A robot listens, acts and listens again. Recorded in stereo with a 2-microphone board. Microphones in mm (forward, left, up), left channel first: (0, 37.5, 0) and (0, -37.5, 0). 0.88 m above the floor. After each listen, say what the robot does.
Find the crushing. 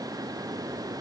Keep listening.
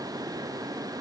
Keep listening.
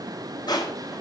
Turn 70° left.
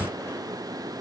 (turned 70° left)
Keep listening.
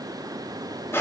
Turn 35° left.
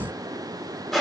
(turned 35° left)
Found it: crushing, straight ahead.